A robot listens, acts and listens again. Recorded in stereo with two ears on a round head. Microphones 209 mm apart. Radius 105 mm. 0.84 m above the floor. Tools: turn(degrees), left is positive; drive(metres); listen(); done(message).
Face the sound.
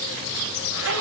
turn(degrees=-60)
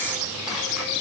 listen()
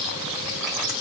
listen()
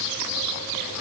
done("I heard a zipper, but can't make it out now. It was about straight ahead or 60° right.")